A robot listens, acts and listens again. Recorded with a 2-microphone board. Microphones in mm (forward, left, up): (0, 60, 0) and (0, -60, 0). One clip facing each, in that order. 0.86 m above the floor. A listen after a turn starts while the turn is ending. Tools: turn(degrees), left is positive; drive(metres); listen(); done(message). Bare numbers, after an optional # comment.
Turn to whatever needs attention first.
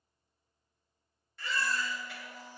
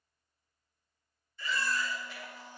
turn(90)
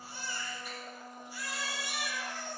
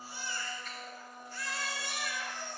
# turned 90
# So it is at 10° left.
turn(10)
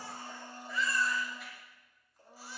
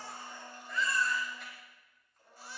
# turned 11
done("Found it: a baby crying, straight ahead, 2 to 4 m away.")